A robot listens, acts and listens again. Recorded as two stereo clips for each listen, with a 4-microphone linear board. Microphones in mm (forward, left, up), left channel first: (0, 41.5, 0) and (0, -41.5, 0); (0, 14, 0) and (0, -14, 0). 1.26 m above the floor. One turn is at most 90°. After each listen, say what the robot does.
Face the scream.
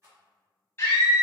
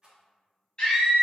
Turn 30° left.
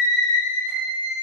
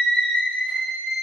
Turn 90° left.
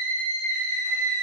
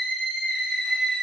Turn 50° left.
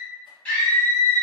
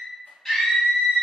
Turn 20° left.
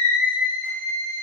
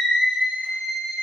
Found it: a scream, straight ahead.